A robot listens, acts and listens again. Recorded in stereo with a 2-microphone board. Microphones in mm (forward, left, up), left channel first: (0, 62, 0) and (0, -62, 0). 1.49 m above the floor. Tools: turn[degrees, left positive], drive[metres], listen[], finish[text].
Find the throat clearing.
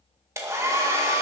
Action: listen[]
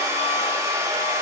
Action: listen[]
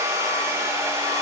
Action: finish[I can't make out throat clearing, only a hair dryer.]